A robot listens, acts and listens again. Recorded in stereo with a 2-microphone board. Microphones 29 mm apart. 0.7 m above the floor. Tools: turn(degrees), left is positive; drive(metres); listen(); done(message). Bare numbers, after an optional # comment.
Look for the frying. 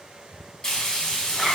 # The frying: about 25° left or 155° left.
turn(25)
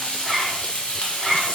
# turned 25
# So it is at 130° left.
turn(130)
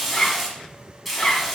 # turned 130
done("Found it: frying, straight ahead.")